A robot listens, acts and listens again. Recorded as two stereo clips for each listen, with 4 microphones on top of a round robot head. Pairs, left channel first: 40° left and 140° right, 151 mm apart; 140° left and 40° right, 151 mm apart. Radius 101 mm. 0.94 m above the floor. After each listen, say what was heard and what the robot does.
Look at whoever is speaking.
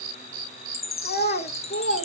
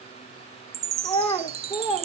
The child speaking: 60° left. Turn 60° left.
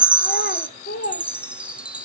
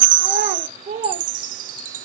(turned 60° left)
Found it: a child speaking, straight ahead.